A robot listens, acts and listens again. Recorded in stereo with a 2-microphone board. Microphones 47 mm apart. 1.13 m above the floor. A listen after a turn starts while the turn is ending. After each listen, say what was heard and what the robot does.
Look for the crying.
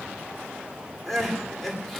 Turn 30° left.
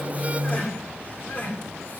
So it is at 140° left. Turn 140° left.
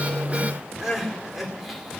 Found it: crying, straight ahead, 2 to 4 m away.